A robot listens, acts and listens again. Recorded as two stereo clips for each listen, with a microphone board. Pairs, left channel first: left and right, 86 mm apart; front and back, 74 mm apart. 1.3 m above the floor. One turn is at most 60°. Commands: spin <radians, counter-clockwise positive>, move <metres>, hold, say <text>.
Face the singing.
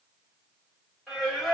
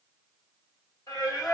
say Facing the singing, 1 to 2 m away.